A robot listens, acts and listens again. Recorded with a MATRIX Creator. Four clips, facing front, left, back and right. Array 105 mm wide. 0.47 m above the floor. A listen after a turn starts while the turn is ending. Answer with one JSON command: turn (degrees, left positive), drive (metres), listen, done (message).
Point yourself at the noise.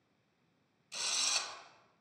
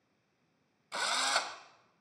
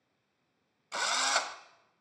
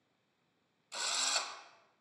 {"turn": 150}
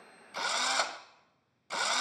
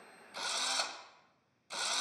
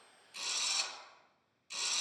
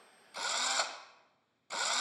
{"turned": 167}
{"turn": -15}
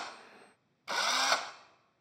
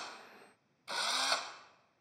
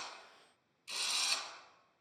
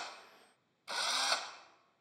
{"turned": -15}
{"done": "Facing the drill."}